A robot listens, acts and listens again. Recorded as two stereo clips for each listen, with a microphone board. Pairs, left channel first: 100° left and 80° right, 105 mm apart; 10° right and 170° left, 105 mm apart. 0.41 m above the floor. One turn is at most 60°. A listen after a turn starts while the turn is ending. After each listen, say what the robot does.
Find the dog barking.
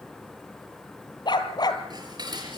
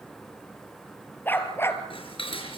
Turn 55° left.
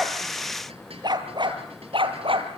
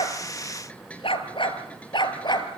Turn 55° right.
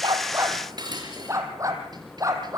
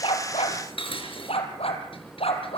Turn 20° right.
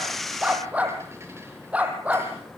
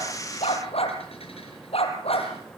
Facing the dog barking.